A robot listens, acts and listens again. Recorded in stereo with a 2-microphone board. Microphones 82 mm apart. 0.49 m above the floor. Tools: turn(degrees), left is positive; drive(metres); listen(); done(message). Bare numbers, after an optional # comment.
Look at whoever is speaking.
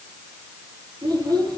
# The child speaking: about 55° right or 125° right.
turn(-55)
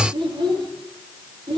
# So it is at 80° right.
turn(-80)
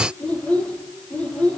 # The child speaking is now 15° left.
turn(15)
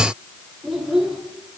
done("Found it: a child speaking, straight ahead.")